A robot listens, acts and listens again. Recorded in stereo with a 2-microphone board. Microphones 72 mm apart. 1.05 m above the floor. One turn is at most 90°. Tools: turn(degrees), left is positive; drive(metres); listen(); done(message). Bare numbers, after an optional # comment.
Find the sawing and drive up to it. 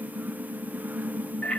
listen()
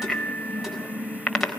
listen()
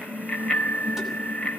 done("I can't make out sawing to turn to.")